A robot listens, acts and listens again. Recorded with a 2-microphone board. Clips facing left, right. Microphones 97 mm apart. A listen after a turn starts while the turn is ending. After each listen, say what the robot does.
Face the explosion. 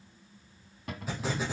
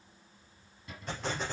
Turn 30° left.
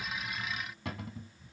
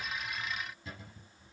Keep listening.
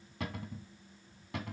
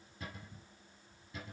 I heard an explosion, but can't make it out now. It was about 25° right or 145° left.